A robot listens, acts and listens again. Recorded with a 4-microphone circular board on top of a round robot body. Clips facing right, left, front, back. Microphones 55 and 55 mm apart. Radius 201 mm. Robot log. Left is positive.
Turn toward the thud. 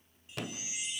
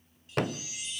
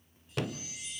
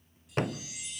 note: The thud: 130° left.
cmd yaw +130
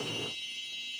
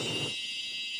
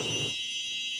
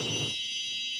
end: I heard a thud from this way, but can't make it out now.